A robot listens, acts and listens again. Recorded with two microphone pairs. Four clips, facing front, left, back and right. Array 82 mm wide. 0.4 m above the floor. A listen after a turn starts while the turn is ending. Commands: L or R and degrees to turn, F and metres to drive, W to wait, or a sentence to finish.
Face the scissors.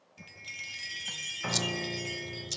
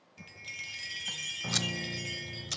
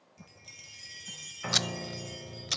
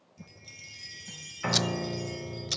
L180
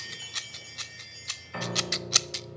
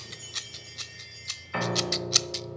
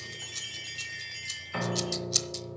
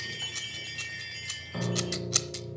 Facing the scissors, 1 to 2 m away.